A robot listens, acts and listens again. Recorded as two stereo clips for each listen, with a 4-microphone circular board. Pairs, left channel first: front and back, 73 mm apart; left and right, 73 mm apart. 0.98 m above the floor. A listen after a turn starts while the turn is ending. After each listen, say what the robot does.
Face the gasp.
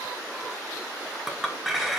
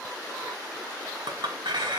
Keep listening.
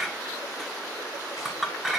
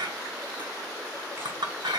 Keep listening.
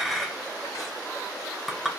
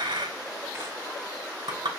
I can't make out a gasp to turn to.